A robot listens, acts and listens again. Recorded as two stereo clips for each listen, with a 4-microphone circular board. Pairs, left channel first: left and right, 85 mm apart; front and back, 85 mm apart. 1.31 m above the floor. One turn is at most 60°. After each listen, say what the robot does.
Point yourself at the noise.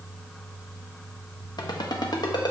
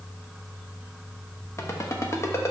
Turn 55° left.
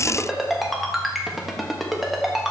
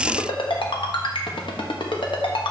Found it: a ringtone, straight ahead.